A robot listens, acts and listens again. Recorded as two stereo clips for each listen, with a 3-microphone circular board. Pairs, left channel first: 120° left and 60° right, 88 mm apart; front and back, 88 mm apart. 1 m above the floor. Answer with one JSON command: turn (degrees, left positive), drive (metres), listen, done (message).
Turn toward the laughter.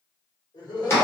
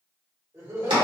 {"turn": 130}
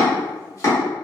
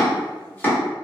{"listen": true}
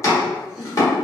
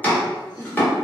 {"turn": 25}
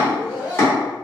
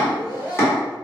{"turn": 15}
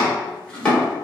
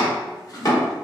{"listen": true}
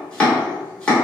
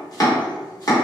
{"listen": true}
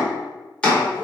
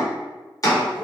{"done": "I heard laughter from this way, but can't make it out now."}